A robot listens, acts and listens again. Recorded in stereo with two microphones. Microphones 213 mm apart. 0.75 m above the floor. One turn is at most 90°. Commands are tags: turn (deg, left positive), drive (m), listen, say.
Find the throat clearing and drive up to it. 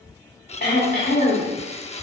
<turn deg="55"/>
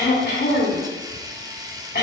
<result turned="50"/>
<turn deg="65"/>
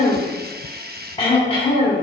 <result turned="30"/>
<turn deg="30"/>
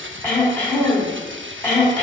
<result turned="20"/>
<turn deg="10"/>
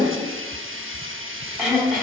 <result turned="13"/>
<drive m="1.0"/>
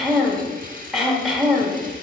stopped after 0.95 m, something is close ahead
<say>Arrived at the throat clearing, straight ahead.</say>